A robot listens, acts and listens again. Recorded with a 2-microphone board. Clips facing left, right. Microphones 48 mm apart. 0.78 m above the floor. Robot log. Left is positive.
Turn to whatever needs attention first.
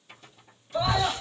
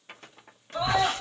note: The scream: about 20° right or 160° right.
cmd yaw -20
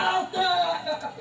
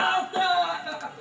note: So it is at 140° right.
cmd yaw -140
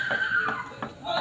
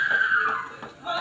note: The scream is now 55° right.
cmd yaw -55
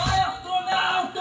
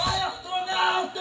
note: The scream is now 30° left.
cmd yaw +30
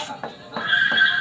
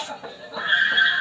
end: Facing the scream, 2 to 4 m away.